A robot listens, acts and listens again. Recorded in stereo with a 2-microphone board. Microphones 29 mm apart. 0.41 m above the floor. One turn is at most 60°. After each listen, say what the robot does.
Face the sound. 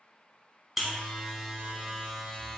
Turn 30° right.
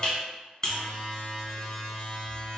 Turn 25° left.
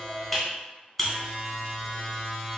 Found it: a buzzer, straight ahead.